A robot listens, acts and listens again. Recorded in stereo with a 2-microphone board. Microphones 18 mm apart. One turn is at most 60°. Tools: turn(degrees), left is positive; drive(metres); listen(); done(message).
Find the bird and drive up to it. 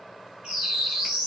turn(degrees=-55)
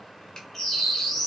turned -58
drive(metres=1.0)
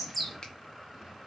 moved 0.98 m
drive(metres=1.0)
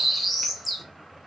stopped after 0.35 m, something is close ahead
done("Arrived at the bird, straight ahead.")